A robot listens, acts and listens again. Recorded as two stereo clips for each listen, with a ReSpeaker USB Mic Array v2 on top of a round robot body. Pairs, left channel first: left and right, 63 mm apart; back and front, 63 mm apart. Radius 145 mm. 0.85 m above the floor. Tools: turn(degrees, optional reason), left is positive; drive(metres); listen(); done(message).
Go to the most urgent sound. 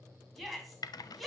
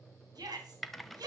drive(metres=1.0)
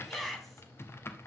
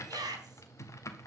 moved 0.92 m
drive(metres=1.0)
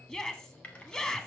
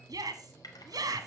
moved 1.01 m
turn(degrees=15, reason="The shout is now 15° left.")
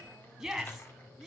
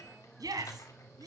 drive(metres=1.0)
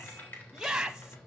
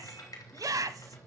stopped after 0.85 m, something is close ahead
turn(degrees=-10, reason="The shout is now 10° right.")
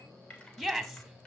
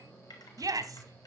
done("Arrived at the shout, straight ahead.")